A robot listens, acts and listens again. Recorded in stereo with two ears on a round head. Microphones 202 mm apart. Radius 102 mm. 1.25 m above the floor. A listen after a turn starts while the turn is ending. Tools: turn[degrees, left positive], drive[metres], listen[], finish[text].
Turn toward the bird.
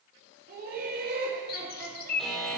Thought: The bird: about 45° left or 135° left.
Action: turn[45]
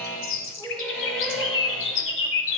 Thought: So it is at 80° left.
Action: turn[80]
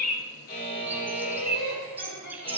Thought: The bird is now 10° right.
Action: turn[-10]
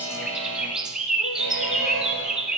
Action: finish[Facing the bird.]